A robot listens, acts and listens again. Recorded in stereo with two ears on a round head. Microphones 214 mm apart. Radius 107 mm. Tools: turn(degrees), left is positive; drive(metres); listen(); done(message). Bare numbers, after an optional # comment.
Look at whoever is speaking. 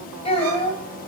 # The child speaking: about 25° left or 155° left.
turn(25)
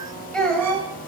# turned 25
done("Facing the child speaking.")